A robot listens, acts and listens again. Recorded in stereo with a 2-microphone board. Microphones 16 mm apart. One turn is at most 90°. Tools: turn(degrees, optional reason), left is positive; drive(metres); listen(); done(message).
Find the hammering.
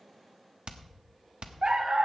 turn(degrees=-70, reason="The hammering: about 70° right or 110° right.")
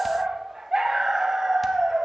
listen()
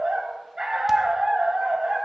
listen()
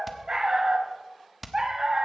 done("Found it: hammering, straight ahead, 1 to 2 m away.")